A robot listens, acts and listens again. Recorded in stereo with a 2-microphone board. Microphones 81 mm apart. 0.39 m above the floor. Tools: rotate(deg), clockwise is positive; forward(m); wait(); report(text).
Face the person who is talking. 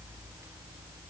wait()
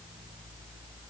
wait()
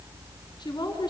rotate(-60)
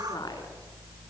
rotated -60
rotate(-55)
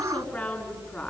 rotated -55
rotate(-15)
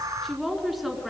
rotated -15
report("Found it: a woman speaking, straight ahead, over 4 m away.")